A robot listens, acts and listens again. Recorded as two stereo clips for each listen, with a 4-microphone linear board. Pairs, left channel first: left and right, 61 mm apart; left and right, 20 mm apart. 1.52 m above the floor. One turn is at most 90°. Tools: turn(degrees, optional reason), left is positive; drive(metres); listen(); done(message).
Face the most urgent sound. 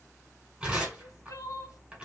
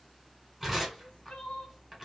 turn(degrees=55, reason="The crying: about 55° left or 125° left.")
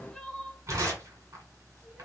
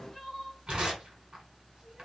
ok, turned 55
done("Found it: crying, straight ahead, 1 to 2 m away.")